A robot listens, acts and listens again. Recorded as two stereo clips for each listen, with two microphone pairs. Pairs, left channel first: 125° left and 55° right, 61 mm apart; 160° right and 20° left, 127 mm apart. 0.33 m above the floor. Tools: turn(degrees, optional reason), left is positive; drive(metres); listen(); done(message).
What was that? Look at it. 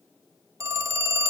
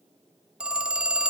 turn(degrees=-60, reason="The phone ringing: 60° right.")
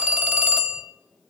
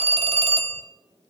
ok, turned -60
done("Found it: a phone ringing, straight ahead.")